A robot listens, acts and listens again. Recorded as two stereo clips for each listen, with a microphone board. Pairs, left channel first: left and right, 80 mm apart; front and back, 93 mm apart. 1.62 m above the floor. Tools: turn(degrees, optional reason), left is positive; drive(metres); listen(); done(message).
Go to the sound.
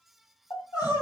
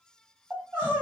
turn(degrees=115, reason="The crying: 115° left.")
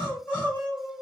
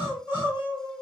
turn(degrees=30, reason="The crying is now 30° left.")
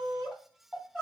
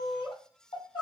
drive(metres=1.0)
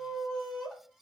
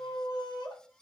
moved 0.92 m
turn(degrees=10, reason="The crying is now 10° left.")
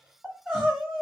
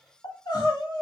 drive(metres=1.0)
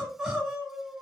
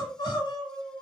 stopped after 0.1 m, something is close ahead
done("Arrived at the crying, straight ahead.")